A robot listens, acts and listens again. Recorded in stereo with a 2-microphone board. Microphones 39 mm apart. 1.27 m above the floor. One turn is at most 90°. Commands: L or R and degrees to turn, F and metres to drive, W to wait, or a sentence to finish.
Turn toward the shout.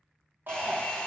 R55
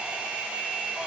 W
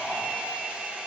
W
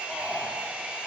Facing the shout, 1 to 2 m away.